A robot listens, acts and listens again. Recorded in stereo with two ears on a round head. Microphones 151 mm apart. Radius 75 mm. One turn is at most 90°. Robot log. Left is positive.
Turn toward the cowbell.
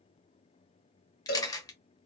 note: The cowbell: about 55° left or 125° left.
cmd yaw +55
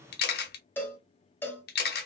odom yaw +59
note: So it is at 15° left.
cmd yaw +15
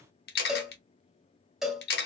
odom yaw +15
end: Facing the cowbell.